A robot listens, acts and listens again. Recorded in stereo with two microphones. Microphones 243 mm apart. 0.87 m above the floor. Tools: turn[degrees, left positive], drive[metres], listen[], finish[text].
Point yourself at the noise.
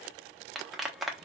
Action: turn[30]
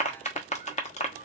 Thought: So it is at 150° left.
Action: turn[150]
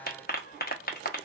Thought: The clap is now 40° left.
Action: turn[40]
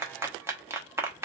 Thought: The clap is now 10° right.
Action: turn[-10]
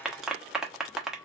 Action: finish[Found it: a clap, straight ahead, under 1 m away.]